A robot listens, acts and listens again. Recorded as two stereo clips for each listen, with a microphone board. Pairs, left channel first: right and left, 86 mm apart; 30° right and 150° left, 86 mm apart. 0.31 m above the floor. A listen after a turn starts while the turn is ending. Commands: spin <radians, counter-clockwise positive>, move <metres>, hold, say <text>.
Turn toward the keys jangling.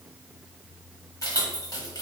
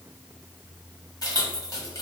spin -0.96
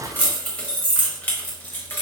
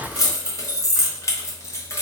spin -0.70
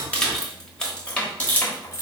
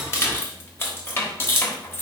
spin -0.96
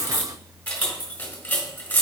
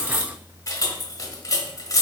spin -0.52
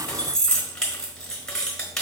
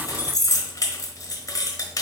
spin -0.17
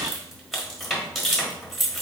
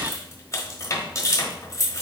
say Facing the keys jangling.